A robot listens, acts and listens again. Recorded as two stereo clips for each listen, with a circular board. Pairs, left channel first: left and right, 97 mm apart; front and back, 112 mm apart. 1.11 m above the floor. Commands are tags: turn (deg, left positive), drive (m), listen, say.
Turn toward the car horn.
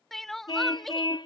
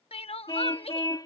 <turn deg="55"/>
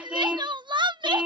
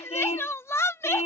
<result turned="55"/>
<turn deg="-10"/>
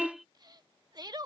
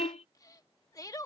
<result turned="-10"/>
<say>Facing the car horn.</say>